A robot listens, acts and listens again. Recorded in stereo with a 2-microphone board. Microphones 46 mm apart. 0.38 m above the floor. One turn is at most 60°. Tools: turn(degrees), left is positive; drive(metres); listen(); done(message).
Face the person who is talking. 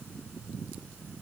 listen()
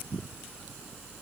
listen()
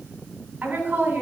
turn(degrees=-40)
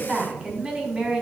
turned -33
turn(degrees=-15)
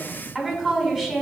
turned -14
done("Facing the woman speaking.")